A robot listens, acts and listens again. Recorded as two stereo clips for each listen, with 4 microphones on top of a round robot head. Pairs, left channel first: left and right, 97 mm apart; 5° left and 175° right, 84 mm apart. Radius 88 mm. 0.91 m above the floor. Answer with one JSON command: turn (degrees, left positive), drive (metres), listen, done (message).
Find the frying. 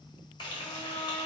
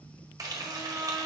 {"turn": 135}
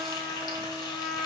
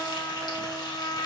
{"listen": true}
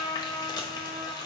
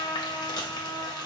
{"turn": 40}
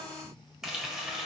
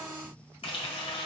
{"done": "Facing the frying."}